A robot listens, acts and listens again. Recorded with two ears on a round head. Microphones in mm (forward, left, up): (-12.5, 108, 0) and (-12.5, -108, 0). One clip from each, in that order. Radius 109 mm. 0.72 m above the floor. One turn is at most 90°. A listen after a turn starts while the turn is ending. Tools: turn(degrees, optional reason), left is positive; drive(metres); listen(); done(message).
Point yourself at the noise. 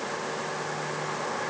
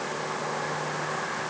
listen()
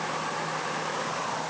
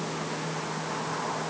listen()
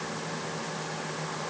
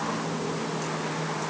done("I can't make out anything to turn to.")